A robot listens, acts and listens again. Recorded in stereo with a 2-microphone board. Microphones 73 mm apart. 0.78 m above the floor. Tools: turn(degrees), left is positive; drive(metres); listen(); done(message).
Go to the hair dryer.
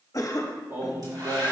turn(degrees=-65)
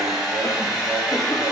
turn(degrees=-10)
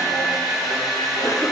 drive(metres=1.0)
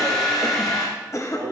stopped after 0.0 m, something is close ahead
done("Something is in my way. I am facing the hair dryer but have not reached it.")